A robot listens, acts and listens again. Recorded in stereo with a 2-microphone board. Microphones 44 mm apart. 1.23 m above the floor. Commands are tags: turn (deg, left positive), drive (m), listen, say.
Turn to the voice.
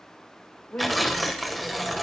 <turn deg="45"/>
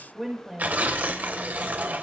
<say>Facing the woman speaking, over 4 m away.</say>